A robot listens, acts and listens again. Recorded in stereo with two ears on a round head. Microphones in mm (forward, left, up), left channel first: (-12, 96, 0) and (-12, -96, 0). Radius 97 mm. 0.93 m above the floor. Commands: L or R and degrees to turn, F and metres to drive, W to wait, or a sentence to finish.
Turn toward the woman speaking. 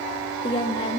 L25
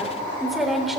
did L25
Found it: a woman speaking, straight ahead.